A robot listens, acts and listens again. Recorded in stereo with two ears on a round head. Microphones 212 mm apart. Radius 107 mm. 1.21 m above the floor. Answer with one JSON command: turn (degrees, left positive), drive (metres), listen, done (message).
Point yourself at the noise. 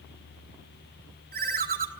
{"turn": -40}
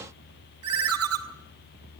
{"turn": -100}
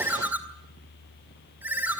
{"done": "Facing the ringtone."}